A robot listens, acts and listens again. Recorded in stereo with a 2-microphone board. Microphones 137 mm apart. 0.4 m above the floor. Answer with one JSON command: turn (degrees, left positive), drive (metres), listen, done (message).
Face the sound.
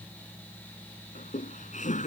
{"turn": 65}
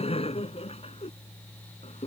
{"turn": 50}
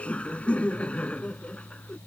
{"turn": 10}
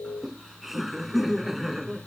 {"done": "Facing the laughter."}